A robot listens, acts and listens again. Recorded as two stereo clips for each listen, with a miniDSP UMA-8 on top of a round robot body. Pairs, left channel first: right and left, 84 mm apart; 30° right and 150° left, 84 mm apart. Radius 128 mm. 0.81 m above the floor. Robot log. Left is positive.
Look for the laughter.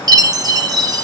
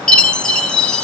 cmd idle
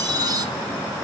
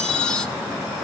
cmd idle
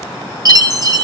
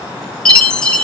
end: I can't make out laughter, only a chime.